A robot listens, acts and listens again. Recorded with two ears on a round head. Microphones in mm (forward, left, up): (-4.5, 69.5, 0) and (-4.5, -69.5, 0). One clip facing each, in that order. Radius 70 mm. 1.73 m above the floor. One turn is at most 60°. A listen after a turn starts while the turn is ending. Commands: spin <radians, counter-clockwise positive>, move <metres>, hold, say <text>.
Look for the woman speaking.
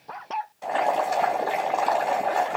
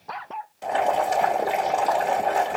hold
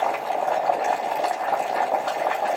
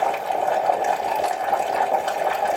hold
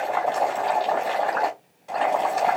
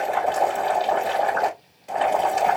say I can't make out a woman speaking to turn to.